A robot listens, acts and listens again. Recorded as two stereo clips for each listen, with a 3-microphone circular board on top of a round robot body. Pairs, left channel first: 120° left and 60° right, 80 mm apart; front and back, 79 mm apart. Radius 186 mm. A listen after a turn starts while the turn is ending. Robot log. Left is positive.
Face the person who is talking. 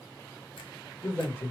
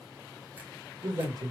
note: The man speaking: 170° left.
cmd yaw +170
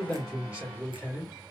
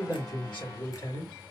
note: The man speaking is now 15° left.
cmd yaw +15
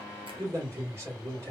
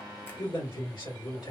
end: Facing the man speaking, 2 to 4 m away.